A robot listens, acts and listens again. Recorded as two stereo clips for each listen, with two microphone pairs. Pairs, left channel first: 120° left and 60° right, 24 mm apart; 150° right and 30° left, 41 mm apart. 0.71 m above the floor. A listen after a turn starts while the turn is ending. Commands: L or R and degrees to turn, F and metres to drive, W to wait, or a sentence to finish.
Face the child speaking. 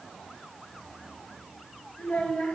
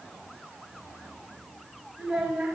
L105
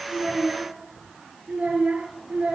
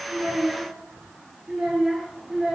R35
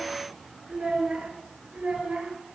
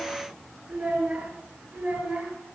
R15
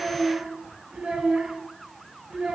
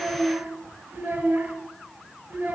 Found it: a child speaking, straight ahead.